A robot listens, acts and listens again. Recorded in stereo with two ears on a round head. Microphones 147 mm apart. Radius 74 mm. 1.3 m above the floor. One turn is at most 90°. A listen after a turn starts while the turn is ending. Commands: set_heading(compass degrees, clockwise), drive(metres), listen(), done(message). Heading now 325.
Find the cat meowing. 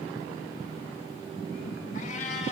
set_heading(285)
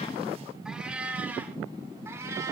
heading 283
set_heading(303)
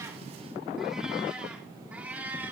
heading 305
set_heading(315)
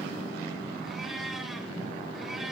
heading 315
done("Found it: a cat meowing, straight ahead, 2 to 4 m away.")